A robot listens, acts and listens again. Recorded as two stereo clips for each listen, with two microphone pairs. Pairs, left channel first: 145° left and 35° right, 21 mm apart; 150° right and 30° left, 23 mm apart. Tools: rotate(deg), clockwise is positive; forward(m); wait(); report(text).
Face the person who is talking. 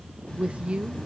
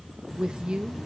rotate(15)
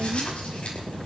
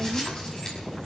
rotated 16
wait()
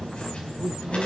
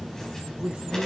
report("Found it: a woman speaking, straight ahead.")